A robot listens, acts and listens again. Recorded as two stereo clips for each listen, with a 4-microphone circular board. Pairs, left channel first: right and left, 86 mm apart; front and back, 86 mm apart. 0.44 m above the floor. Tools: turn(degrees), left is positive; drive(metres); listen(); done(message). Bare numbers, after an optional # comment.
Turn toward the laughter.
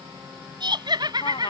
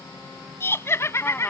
# The laughter: 55° left.
turn(55)
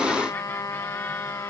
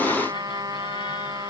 listen()
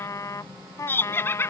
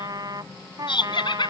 # The laughter is now 25° right.
turn(-25)
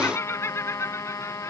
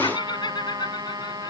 # The laughter is now 30° right.
turn(-30)
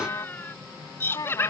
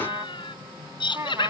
# The laughter is now 25° right.
turn(-25)
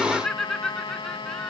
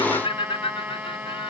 done("Found it: laughter, straight ahead.")